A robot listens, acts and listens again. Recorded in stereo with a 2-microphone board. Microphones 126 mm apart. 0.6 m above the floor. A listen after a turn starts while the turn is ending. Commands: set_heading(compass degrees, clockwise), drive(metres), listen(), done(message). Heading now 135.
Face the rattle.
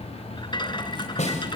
set_heading(95)
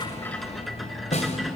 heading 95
done("Facing the rattle.")